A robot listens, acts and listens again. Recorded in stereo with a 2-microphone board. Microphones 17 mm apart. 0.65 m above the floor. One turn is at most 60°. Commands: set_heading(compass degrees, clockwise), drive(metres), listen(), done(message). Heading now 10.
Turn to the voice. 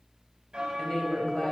set_heading(320)
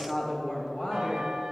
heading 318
set_heading(258)
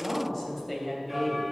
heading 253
set_heading(243)
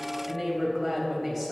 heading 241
done("Facing the woman speaking, 2 to 4 m away.")